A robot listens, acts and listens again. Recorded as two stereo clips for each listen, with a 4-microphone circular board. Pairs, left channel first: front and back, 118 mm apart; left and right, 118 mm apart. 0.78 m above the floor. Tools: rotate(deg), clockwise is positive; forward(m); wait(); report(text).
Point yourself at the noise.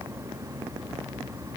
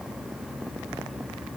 wait()
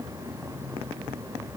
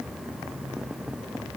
wait()
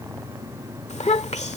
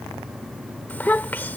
rotate(-15)
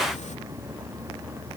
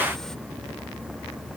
wait()
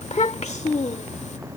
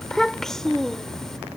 report("Facing the child speaking.")